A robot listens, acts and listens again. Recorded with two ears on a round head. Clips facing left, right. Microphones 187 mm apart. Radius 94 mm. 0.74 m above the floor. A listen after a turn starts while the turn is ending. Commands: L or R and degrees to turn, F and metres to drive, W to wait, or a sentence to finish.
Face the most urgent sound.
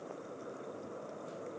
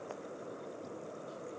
W
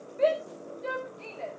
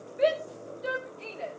R30
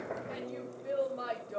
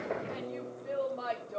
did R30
L15
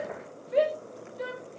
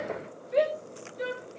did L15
Found it: a shout, straight ahead, over 4 m away.